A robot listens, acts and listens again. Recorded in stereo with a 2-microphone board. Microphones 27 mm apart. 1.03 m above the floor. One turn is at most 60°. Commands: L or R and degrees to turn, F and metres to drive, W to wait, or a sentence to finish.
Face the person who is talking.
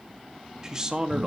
R25
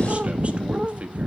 W
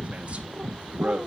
R60
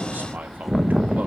R60
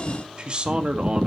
R30
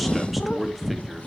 W
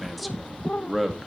Facing the man speaking.